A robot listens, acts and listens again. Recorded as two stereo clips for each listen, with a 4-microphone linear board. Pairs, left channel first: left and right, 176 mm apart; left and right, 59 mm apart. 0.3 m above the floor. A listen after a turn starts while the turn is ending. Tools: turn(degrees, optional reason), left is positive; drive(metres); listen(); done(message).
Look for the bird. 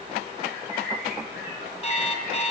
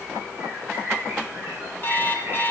turn(degrees=-60, reason="The bird: about 60° right or 120° right.")
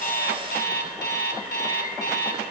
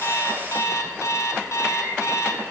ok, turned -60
listen()
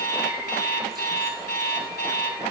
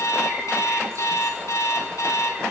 listen()
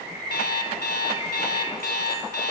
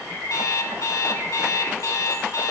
turn(degrees=-60, reason="So it is at 60° right.")
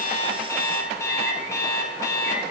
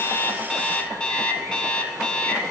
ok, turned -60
listen()
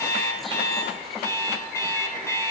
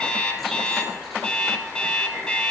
listen()
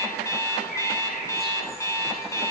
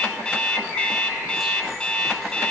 done("I heard a bird from this way, but can't make it out now.")